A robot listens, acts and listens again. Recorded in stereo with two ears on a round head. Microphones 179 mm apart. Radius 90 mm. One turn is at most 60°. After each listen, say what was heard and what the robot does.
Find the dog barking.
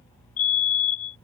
Keep listening.
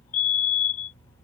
Keep listening.
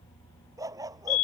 The dog barking: about 20° right or 160° right. Turn 20° right.
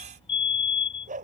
So it is at 140° right. Turn 60° right.
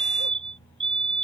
Nothing new. It was at 80° right. Turn 60° right.
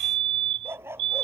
The dog barking is now 10° right. Turn 10° right.
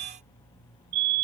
Keep listening.
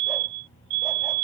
Keep listening.
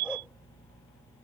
I heard a dog barking from this way, but can't make it out now.